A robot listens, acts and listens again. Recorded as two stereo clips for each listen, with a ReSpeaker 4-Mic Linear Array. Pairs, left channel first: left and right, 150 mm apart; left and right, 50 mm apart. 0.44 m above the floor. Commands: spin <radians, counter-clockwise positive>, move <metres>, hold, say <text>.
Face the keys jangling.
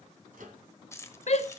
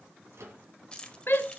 spin 0.35
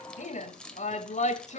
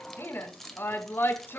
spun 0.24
say Found it: keys jangling, straight ahead.